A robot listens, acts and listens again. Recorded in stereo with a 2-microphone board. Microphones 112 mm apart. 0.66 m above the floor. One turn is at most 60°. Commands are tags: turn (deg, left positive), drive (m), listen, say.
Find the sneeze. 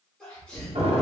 <turn deg="30"/>
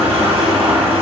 <listen/>
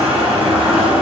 <say>I heard a sneeze, but can't make it out now. It was about 25° right or 145° left.</say>